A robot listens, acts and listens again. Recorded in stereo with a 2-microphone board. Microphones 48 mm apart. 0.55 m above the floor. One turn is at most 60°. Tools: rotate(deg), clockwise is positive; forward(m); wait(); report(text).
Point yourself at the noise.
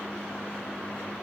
wait()
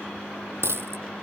rotate(60)
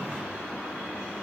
wait()
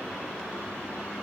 report("I heard a dropped coin, but can't make it out now. It was about straight ahead or 60° right.")